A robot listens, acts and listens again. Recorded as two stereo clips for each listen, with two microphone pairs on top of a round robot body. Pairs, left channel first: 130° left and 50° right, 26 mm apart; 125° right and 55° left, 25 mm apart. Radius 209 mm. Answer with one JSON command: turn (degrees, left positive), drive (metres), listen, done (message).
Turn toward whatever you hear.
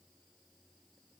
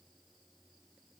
{"listen": true}
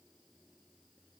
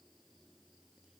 {"listen": true}
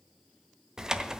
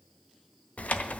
{"turn": -120}
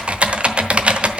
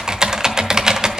{"done": "Facing the typing on a keyboard."}